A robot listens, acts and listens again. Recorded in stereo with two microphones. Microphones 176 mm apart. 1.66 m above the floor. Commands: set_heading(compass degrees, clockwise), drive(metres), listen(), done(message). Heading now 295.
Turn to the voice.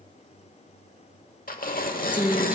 set_heading(325)
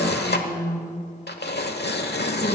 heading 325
set_heading(305)
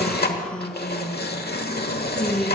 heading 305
done("Found it: a woman speaking, straight ahead.")